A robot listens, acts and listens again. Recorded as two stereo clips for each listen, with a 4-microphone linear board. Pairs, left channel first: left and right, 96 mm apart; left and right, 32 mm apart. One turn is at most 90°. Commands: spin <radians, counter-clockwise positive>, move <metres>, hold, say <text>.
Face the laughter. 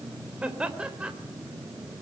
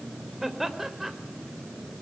spin -0.52
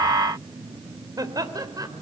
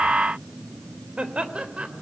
spin -1.57
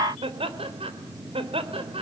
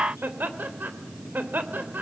spin -1.40
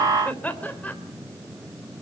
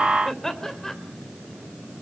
spin 0.26
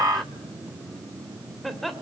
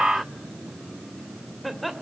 say Found it: laughter, straight ahead, 2 to 4 m away.